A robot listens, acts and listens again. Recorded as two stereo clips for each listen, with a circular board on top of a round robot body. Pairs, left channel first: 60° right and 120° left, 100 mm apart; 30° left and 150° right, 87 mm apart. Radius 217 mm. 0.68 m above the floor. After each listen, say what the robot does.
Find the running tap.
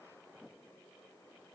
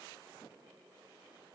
Keep listening.
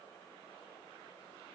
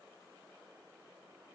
Keep listening.
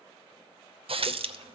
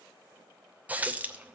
Turn 140° left.
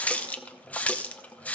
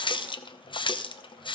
Turn 15° left.
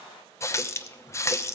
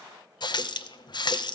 Found it: a running tap, straight ahead, under 1 m away.